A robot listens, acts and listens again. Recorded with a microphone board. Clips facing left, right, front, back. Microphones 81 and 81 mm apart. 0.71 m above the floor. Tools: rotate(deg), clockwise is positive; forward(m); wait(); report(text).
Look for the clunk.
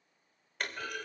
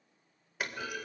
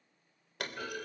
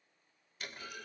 rotate(10)
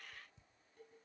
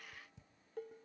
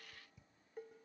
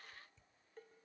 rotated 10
report("I heard a clunk from this way, but can't make it out now.")